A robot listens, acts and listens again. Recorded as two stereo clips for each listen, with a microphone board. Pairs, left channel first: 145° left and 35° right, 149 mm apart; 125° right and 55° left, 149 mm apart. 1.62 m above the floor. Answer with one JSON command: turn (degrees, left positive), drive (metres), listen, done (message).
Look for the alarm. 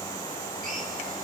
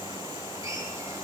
{"listen": true}
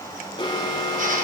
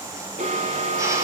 {"turn": 90}
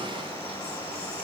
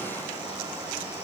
{"listen": true}
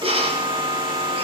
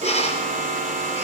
{"turn": 20}
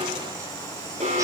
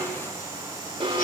{"done": "Facing the alarm."}